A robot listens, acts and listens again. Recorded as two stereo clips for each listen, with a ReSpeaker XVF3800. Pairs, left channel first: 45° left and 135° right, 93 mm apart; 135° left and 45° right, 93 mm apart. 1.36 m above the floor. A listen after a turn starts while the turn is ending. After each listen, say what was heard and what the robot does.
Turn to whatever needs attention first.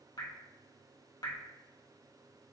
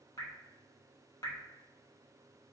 Keep listening.
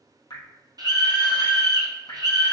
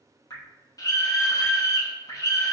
The scream: 175° right. Turn 175° right.
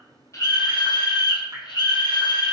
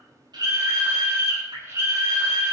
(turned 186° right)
The scream is now 10° left. Turn 10° left.
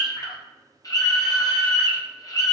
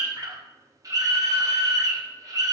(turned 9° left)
Facing the scream.